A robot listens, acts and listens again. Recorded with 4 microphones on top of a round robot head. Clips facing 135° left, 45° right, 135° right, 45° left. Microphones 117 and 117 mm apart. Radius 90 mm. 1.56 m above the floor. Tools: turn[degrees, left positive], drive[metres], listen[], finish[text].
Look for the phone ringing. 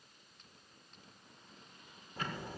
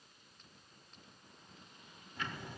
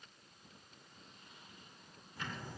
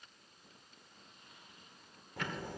Action: listen[]
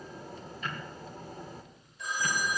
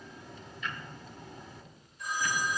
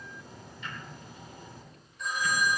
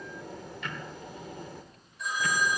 Thought: The phone ringing: 135° left.
Action: turn[135]
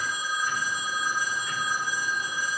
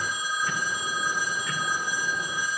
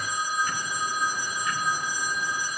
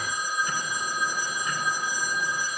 Thought: The phone ringing is now 35° left.
Action: turn[35]
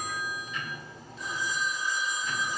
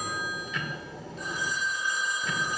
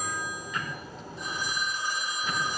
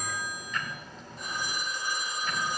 Action: finish[Facing the phone ringing, over 4 m away.]